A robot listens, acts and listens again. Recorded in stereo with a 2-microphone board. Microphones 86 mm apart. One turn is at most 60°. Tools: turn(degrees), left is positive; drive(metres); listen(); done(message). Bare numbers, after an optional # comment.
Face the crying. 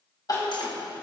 # The crying: about 45° left or 135° left.
turn(45)
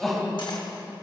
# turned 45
done("Found it: crying, straight ahead, 2 to 4 m away.")